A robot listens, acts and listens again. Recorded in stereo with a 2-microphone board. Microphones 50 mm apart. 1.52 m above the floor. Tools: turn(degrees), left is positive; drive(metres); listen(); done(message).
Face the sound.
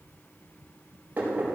turn(degrees=-35)
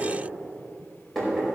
done("Found it: knocking, straight ahead, over 4 m away.")